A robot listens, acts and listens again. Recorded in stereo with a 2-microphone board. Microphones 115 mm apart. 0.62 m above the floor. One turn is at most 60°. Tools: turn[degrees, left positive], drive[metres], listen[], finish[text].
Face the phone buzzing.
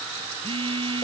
Thought: The phone buzzing: about 50° right or 130° right.
Action: turn[-50]
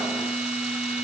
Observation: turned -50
Action: finish[Found it: a phone buzzing, straight ahead, under 1 m away.]